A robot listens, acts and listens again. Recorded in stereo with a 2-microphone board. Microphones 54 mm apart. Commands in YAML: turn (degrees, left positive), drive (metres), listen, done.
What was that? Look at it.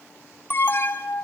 turn: 40
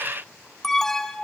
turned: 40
done: "Found it: an alarm, straight ahead."